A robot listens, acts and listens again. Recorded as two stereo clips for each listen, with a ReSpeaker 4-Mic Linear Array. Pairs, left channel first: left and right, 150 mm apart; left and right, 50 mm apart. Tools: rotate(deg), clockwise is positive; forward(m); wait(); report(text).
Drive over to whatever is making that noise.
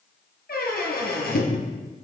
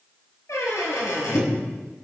rotate(-90)
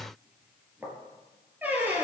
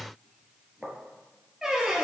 rotate(10)
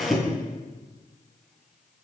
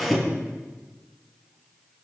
forward(1.0)
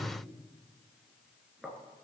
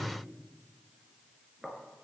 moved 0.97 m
forward(1.0)
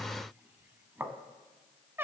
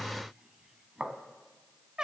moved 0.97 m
rotate(15)
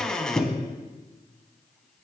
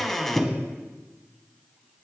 forward(1.0)
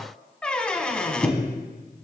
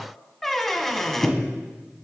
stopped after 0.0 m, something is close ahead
report("I am next to the squeak.")